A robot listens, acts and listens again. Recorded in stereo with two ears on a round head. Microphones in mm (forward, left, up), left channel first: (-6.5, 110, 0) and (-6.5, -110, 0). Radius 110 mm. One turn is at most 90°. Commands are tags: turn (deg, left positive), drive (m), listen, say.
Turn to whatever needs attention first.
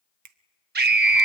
<turn deg="-40"/>
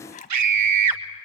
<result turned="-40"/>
<turn deg="-90"/>
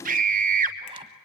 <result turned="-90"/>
<turn deg="-35"/>
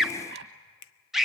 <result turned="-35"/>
<say>Facing the scream.</say>